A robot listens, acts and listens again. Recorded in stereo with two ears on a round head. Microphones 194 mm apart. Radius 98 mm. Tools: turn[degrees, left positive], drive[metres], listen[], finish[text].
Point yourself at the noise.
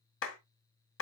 Thought: The clap: about 65° left or 115° left.
Action: turn[65]
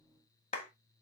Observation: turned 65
Thought: So it is at 35° left.
Action: turn[35]
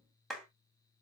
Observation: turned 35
Action: finish[Found it: a clap, straight ahead.]